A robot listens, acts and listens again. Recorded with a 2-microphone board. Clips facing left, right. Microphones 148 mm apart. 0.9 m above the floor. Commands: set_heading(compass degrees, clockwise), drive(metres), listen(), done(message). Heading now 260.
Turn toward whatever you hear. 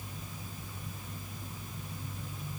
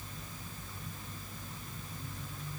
listen()
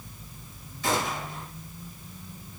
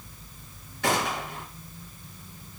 set_heading(335)
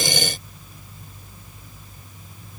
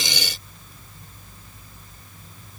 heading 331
listen()
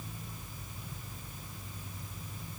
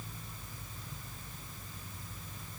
done("I heard a gunshot, but can't make it out now. It was about 5° right or 35° right.")